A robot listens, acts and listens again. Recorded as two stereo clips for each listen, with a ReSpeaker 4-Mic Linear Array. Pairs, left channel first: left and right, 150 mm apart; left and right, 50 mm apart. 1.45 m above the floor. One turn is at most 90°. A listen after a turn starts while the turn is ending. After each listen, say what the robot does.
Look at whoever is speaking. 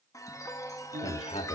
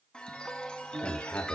Turn 45° left.
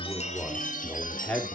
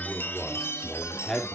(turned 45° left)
Facing the man speaking, 2 to 4 m away.